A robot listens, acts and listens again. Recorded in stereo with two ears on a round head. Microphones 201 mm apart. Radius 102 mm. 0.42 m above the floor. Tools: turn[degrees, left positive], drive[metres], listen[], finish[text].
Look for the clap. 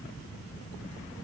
Action: listen[]
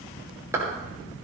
Action: turn[-30]
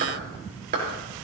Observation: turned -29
Thought: So it is at 135° right.
Action: turn[-135]
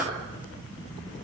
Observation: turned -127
Thought: Nothing new. It was at 10° right.
Action: turn[-10]
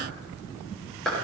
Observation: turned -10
Action: finish[Facing the clap.]